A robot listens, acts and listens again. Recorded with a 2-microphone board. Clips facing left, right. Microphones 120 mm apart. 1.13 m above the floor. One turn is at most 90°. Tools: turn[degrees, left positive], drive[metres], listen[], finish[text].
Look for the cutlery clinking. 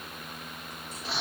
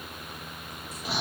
Action: listen[]
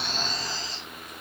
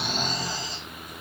Action: listen[]
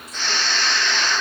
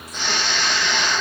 Action: finish[I can't make out cutlery clinking, only snoring.]